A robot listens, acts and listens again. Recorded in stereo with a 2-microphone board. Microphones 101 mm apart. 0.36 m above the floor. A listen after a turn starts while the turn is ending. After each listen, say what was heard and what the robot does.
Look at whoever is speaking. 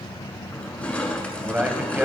The man speaking: about 15° right or 165° right. Turn 15° right.
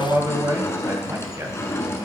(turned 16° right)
So it is at 150° right. Turn 150° right.
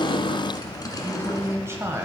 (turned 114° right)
The man speaking is now 30° right. Turn 30° right.
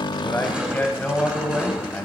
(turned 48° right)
The man speaking is now 20° left. Turn 20° left.
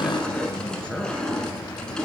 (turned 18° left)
Keep listening.
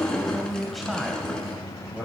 Facing the man speaking, 1 to 2 m away.